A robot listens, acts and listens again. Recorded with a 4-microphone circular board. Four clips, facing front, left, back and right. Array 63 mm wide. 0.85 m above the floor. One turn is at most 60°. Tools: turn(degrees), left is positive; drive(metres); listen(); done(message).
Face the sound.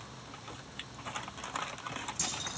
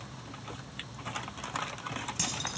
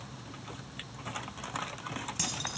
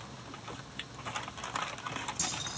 turn(degrees=60)
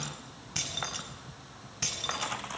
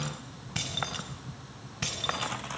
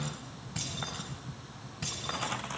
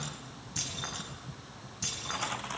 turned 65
turn(degrees=60)
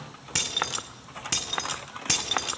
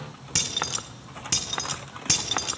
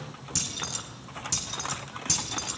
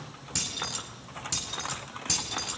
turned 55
turn(degrees=30)
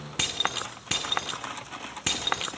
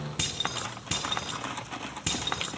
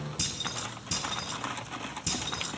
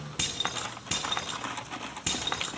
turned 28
done("Found it: keys jangling, straight ahead.")